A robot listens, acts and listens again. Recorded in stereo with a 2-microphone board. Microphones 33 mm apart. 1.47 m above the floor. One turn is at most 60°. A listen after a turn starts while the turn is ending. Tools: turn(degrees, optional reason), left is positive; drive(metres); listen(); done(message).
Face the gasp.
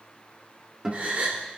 turn(degrees=-45, reason="The gasp: about 45° right or 135° right.")
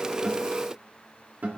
listen()
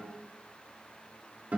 done("I heard a gasp, but can't make it out now. It was about straight ahead or 90° right.")